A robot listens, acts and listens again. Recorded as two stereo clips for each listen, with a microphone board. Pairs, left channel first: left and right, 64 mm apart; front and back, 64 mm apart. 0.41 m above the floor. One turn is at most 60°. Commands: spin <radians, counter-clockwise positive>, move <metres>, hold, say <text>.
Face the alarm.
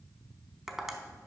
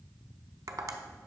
hold
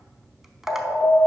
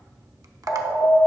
spin 0.44
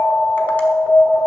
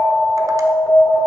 say Facing the alarm.